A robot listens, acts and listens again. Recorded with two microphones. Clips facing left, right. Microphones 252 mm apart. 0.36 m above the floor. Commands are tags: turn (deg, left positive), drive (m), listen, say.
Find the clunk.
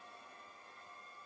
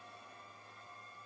<listen/>
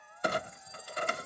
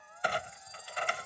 <turn deg="45"/>
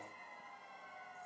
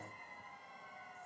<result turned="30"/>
<listen/>
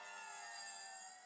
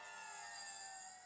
<say>I heard a clunk, but can't make it out now. It was about 15° left or 105° left.</say>